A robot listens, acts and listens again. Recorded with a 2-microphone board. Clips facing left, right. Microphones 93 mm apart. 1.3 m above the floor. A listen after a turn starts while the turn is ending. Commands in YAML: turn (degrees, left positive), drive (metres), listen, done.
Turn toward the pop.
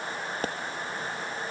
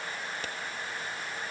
turn: 40
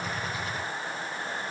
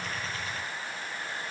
listen: true
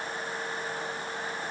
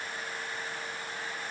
done: "I heard a pop, but can't make it out now. It was about straight ahead or 100° left."